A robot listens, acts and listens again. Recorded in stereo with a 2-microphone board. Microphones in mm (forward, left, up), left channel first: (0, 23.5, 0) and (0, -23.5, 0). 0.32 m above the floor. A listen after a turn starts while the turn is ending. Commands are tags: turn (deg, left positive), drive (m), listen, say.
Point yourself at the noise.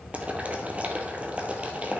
<turn deg="-30"/>
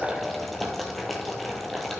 <say>Facing the boiling, 1 to 2 m away.</say>